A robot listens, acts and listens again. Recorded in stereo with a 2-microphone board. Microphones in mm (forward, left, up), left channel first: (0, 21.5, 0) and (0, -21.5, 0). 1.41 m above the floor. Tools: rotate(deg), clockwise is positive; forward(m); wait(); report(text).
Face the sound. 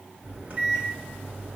rotate(45)
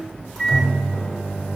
report("Facing the microwave.")